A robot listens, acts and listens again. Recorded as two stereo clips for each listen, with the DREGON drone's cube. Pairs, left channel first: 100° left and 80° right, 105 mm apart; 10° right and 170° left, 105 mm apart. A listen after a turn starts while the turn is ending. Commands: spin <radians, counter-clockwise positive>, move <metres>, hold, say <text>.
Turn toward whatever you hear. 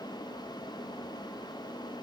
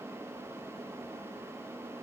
hold
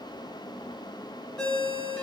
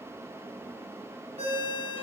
spin -3.05
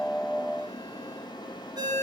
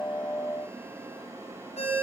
spin -0.44
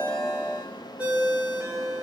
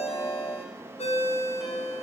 say Facing the ringtone, 2 to 4 m away.